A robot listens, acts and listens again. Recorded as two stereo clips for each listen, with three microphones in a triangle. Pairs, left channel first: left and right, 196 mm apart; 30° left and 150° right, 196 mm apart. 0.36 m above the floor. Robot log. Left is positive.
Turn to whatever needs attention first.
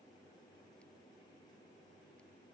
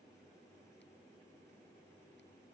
cmd idle
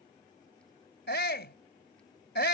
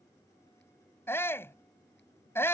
note: The shout: 105° left.
cmd yaw +105
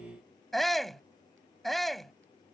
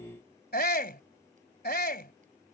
end: Found it: a shout, straight ahead.